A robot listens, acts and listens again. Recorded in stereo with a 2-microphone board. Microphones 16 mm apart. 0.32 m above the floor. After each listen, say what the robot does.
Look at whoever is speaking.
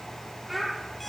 Turn 30° right.
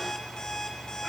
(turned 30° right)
Keep listening.
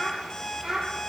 Turn 140° right.
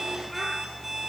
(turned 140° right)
Keep listening.
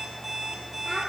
Keep listening.
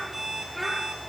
Turn 10° left.
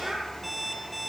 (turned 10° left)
Keep listening.
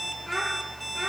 Facing the child speaking.